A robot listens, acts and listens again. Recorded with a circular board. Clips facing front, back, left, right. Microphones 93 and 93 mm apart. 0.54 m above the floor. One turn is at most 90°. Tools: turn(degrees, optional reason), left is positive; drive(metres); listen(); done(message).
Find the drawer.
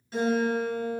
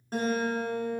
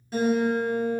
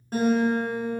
listen()
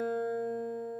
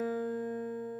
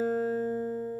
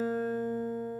listen()
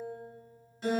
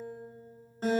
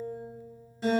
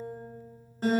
done("I can't make out a drawer, only a guitar.")